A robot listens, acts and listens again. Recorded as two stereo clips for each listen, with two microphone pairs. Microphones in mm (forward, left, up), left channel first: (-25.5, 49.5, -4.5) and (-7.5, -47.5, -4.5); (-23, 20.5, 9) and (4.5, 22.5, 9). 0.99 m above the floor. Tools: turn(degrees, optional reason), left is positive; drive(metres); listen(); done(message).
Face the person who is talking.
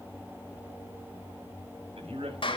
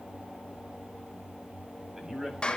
turn(degrees=-70, reason="The man speaking: 70° right.")
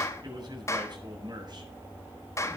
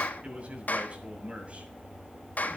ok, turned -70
turn(degrees=-35, reason="The man speaking is now 35° right.")
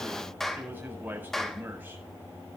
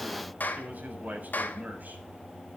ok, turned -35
turn(degrees=-10, reason="The man speaking is now 10° right.")
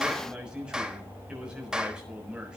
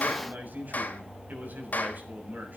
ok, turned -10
done("Facing the man speaking, over 4 m away.")